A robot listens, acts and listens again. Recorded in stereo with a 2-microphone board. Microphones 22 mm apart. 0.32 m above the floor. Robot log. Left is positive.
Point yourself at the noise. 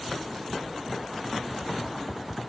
cmd idle
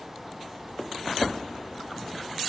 cmd idle
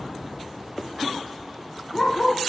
note: The dog barking: about 30° left or 150° left.
cmd yaw +30
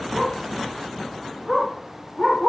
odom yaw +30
end: Found it: a dog barking, straight ahead, 2 to 4 m away.